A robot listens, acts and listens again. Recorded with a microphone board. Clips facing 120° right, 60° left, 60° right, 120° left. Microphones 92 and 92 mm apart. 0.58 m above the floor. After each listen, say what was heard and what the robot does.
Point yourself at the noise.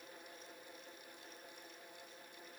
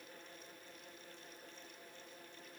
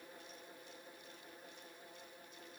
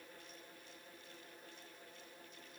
Keep listening.
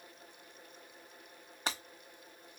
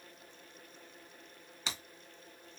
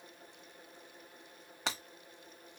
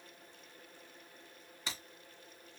The breaking glass: 75° right. Turn 75° right.
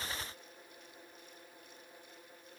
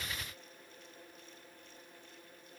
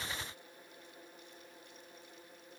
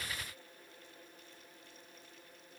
I heard breaking glass from this way, but can't make it out now.